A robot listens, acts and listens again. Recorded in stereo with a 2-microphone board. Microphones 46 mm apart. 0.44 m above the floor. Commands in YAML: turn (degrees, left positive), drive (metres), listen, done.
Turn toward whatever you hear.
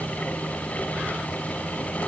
listen: true
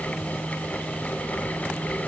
listen: true
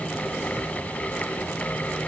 done: "I can't make out anything."